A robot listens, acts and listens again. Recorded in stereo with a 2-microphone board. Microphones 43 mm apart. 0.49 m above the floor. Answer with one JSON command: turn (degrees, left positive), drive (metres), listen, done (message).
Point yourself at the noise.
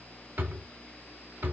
{"turn": -55}
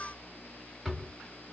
{"done": "Facing the drawer, 1 to 2 m away."}